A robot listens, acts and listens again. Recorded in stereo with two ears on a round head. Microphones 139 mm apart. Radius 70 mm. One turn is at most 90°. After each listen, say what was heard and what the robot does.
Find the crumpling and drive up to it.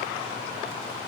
Keep listening.
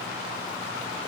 Keep listening.
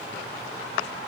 I can't make out crumpling to turn to.